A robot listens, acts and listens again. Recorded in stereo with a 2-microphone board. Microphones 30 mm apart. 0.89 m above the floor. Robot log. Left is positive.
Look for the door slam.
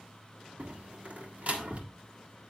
note: The door slam: about 55° right or 125° right.
cmd yaw -55
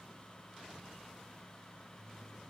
cmd idle
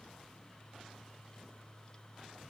end: I heard a door slam, but can't make it out now. It was about straight ahead or 70° right.